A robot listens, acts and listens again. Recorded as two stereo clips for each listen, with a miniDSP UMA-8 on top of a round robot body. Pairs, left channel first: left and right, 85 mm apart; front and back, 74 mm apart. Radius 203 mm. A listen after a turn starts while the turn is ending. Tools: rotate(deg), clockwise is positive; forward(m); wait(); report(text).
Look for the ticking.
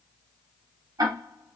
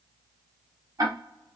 rotate(140)
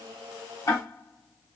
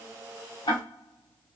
rotate(-35)
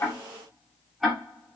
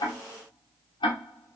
report("Found it: ticking, straight ahead.")